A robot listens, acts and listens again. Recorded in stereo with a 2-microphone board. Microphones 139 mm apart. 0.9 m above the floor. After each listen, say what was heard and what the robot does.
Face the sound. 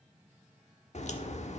The crack: about 55° left or 125° left. Turn 55° left.
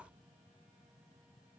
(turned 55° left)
Keep listening.
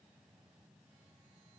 I heard a crack, but can't make it out now. It was about straight ahead or 70° left.